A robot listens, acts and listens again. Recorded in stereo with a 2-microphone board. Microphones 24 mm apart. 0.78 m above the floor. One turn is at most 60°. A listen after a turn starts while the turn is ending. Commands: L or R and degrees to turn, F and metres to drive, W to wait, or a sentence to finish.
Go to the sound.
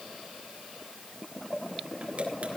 W
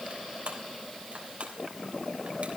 R60
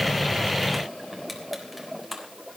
F1.0
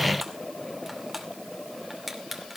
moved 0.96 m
F1.0
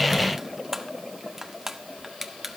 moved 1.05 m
R15
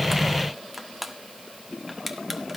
F1.0
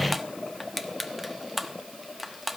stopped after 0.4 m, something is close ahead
I am next to the crushing.